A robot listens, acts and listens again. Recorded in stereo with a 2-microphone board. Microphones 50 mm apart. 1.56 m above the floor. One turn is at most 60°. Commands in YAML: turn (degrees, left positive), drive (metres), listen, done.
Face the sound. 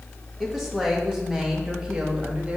turn: -20
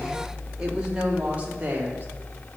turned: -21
turn: -35
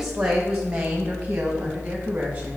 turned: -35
turn: -25
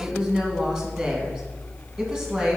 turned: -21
done: "Found it: a woman speaking, straight ahead, 2 to 4 m away."